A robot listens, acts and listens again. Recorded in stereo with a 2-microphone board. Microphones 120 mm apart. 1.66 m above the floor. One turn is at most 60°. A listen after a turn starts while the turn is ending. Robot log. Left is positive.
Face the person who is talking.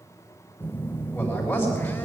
note: The man speaking: about 20° left or 160° left.
cmd yaw +20
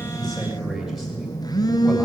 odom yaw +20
cmd idle
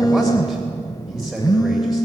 end: Found it: a man speaking, straight ahead, 2 to 4 m away.